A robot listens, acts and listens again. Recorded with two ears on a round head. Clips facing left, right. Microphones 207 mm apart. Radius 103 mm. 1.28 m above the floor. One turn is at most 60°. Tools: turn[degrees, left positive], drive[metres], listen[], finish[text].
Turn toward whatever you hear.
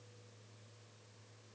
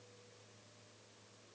Action: listen[]
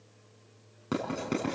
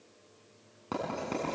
Thought: The writing: about 25° left or 155° left.
Action: turn[25]
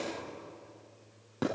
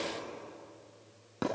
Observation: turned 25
Action: finish[Facing the writing.]